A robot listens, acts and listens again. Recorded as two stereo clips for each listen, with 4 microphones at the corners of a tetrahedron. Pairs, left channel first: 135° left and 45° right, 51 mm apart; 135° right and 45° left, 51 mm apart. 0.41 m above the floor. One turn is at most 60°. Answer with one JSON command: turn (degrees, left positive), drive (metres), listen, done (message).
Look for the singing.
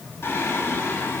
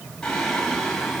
{"turn": 60}
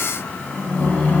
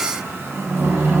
{"turn": 60}
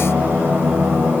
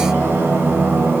{"done": "Found it: singing, straight ahead."}